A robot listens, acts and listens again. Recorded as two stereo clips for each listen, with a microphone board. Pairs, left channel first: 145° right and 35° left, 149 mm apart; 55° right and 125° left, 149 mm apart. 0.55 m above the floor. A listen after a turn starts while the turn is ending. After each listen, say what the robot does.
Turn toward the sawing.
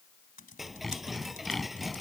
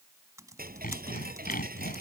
Turn 55° right.
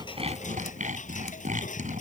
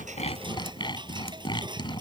Facing the sawing.